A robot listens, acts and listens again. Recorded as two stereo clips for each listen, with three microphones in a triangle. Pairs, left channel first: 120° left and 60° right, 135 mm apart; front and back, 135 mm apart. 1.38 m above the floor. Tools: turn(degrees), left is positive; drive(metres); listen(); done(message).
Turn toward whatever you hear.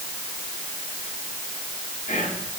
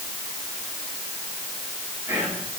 turn(degrees=105)
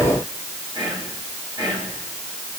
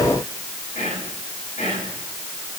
done("Found it: whispering, straight ahead.")